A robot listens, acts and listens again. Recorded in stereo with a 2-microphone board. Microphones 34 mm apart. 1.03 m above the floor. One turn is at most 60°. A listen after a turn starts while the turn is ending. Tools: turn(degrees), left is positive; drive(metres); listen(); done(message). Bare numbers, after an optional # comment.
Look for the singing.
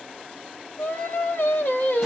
# The singing: about 60° left or 120° left.
turn(60)
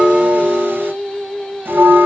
# So it is at 15° left.
turn(15)
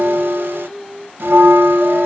done("Facing the singing, under 1 m away.")